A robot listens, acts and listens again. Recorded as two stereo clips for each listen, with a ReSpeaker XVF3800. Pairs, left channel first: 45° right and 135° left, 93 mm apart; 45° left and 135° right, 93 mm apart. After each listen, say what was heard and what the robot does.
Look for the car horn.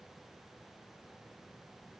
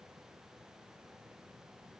Keep listening.
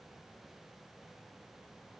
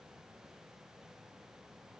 Keep listening.
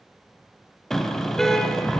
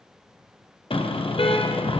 The car horn: 40° left. Turn 40° left.
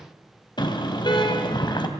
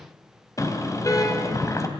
The car horn is now 10° right. Turn 10° right.
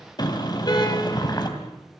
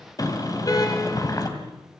Facing the car horn, 2 to 4 m away.